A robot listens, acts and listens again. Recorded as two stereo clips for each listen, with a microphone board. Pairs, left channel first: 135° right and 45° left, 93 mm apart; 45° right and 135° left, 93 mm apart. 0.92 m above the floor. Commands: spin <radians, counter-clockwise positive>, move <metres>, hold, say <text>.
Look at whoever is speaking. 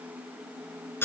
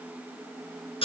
hold
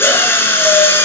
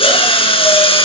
hold
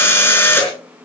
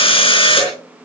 say I can't make out anyone speaking, only a drill.